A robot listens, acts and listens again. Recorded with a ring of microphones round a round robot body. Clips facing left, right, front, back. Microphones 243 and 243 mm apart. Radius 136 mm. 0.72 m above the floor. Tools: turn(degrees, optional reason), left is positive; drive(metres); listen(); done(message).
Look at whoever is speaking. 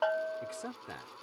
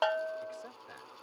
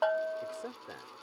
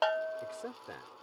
turn(degrees=90, reason="The man speaking: 90° left.")
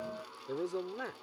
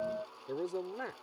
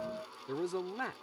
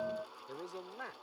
done("Found it: a man speaking, straight ahead.")